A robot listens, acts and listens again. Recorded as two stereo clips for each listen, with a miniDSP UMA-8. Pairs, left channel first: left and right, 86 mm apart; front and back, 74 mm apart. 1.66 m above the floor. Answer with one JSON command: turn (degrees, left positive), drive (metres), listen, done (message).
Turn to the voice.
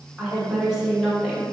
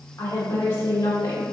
{"done": "Found it: a woman speaking, straight ahead, 1 to 2 m away."}